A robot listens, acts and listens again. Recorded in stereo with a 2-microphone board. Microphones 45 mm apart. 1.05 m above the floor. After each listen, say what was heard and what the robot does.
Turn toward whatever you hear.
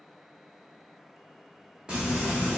The frying: about 20° right or 160° right. Turn 20° right.
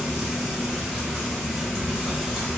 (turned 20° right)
Facing the frying, 1 to 2 m away.